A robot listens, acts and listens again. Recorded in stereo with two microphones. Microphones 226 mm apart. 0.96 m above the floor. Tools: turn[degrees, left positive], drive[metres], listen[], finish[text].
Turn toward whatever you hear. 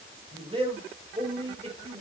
Thought: The man speaking: about 30° right or 150° right.
Action: turn[-30]
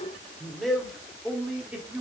Action: finish[Found it: a man speaking, straight ahead.]